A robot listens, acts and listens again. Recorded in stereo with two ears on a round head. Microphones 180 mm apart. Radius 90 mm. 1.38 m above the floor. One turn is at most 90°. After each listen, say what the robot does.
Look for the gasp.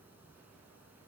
Keep listening.
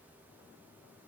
Keep listening.
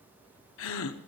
Turn 75° left.
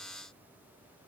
Keep listening.
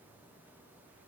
I heard a gasp, but can't make it out now. It was about straight ahead or 30° left.